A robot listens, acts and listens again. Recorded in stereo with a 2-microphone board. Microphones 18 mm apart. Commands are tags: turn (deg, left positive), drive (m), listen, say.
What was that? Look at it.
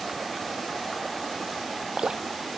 <turn deg="-65"/>
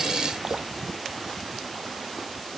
<listen/>
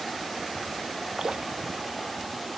<turn deg="-50"/>
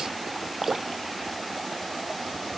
<turn deg="-15"/>
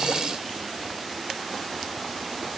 <listen/>
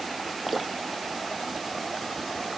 <say>Facing the dripping.</say>